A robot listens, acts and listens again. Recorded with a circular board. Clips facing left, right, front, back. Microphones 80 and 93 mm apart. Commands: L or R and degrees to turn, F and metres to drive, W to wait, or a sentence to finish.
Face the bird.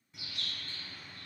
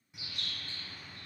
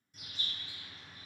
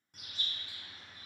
R165
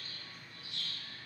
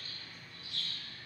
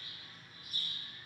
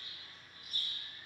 L40
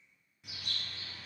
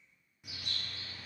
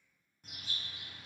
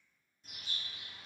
R10
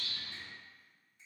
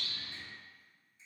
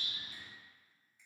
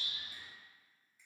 Facing the bird.